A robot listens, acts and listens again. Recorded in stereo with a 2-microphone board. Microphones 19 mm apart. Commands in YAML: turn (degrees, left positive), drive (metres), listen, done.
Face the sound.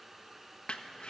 turn: 65
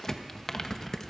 turn: 30
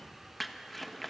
done: "Found it: crumpling, straight ahead."